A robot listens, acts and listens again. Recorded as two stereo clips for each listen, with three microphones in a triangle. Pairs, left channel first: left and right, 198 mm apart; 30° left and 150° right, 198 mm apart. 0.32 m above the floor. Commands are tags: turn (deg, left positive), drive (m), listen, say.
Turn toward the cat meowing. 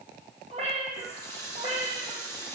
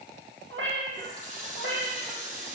<turn deg="-145"/>
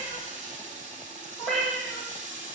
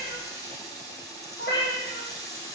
<say>Facing the cat meowing, 2 to 4 m away.</say>